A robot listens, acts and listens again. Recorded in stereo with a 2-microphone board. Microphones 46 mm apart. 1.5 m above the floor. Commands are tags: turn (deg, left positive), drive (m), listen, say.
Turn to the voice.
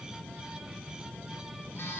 <listen/>
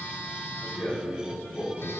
<turn deg="70"/>
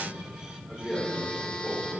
<turn deg="20"/>
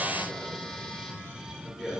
<turn deg="10"/>
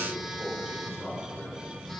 <say>Facing the man speaking, over 4 m away.</say>